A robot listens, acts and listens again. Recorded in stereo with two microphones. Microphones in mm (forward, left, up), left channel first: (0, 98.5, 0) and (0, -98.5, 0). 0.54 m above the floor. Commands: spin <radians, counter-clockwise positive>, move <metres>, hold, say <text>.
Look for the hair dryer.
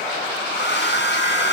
spin 1.13
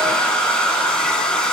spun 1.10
say Found it: a hair dryer, straight ahead, 2 to 4 m away.